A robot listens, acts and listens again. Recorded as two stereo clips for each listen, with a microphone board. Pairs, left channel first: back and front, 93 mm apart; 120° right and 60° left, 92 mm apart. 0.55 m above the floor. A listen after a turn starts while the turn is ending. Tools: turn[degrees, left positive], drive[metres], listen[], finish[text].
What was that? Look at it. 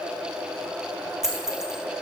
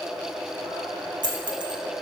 Thought: The dropped coin: 85° left.
Action: turn[85]
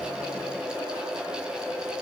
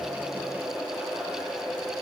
Action: finish[Facing where the dropped coin came from. I can't hear it now.]